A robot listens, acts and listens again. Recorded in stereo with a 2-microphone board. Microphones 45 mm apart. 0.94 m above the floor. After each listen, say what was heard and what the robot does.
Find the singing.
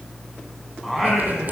Turn 30° left.
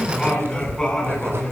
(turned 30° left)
So it is at 165° left. Turn 165° left.
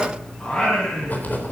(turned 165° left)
The singing is now 20° left. Turn 20° left.
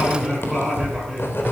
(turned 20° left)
Facing the singing, over 4 m away.